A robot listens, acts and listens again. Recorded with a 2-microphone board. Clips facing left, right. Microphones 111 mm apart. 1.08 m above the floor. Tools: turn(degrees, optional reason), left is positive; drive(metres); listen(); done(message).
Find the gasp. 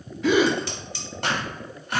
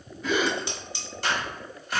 turn(degrees=90)
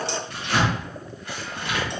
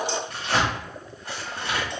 done("Facing where the gasp came from. I can't hear it now.")